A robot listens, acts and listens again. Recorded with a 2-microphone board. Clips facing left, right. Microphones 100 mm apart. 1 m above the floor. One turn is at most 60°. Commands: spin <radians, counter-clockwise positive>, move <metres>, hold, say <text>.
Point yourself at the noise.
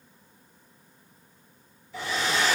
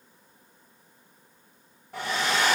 spin -1.05
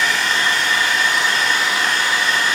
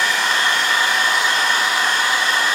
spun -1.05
spin -0.96
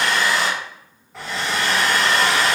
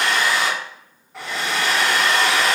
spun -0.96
say Found it: a hair dryer, straight ahead, 1 to 2 m away.